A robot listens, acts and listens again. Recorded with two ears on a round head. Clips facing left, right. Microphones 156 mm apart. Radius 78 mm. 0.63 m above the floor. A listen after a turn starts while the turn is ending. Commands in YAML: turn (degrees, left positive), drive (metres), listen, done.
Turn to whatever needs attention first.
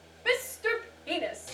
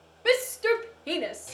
turn: -55
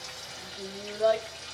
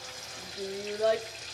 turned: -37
turn: -30
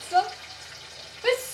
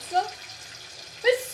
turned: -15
turn: -15
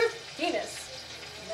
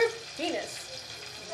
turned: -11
done: "Found it: a shout, straight ahead."